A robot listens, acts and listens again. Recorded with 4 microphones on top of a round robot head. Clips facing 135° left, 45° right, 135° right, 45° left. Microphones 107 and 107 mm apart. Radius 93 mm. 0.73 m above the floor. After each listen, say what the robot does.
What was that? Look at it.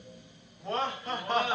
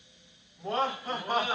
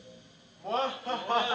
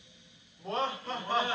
Turn 125° right.
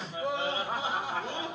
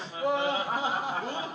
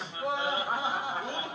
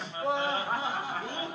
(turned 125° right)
Turn 75° right.
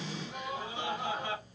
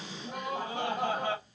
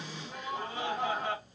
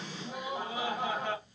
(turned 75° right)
Turn 45° right.
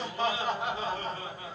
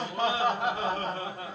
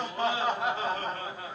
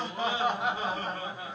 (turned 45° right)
Turn 30° right.
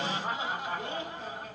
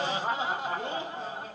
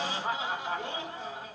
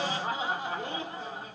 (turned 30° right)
Turn 10° left.
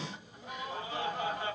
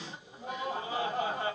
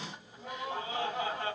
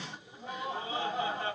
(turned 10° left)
Facing the laughter, 1 to 2 m away.